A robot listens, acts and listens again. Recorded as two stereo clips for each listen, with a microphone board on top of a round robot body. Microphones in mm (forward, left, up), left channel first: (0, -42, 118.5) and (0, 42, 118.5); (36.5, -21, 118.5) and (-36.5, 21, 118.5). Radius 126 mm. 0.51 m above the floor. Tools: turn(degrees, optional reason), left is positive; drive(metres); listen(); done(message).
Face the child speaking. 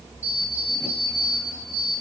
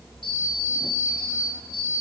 listen()
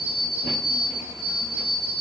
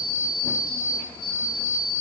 listen()
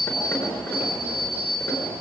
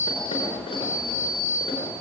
done("I can't make out a child speaking to turn to.")